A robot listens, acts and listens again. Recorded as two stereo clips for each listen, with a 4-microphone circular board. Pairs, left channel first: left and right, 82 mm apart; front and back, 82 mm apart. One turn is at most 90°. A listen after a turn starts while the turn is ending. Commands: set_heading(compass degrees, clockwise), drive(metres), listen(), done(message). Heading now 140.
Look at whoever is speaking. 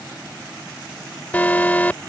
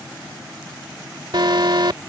listen()
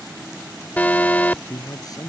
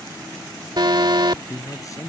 set_heading(95)
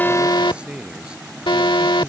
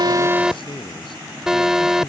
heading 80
set_heading(90)
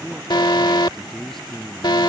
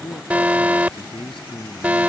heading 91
done("Found it: a man speaking, straight ahead.")